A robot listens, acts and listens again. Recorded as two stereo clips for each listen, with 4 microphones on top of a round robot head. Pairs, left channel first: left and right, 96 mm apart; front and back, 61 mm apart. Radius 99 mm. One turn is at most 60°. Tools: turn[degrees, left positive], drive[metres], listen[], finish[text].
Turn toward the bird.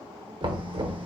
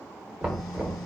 Action: listen[]
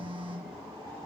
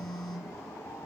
Action: listen[]
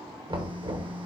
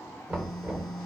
Action: finish[I can't make out a bird, only a phone buzzing and knocking.]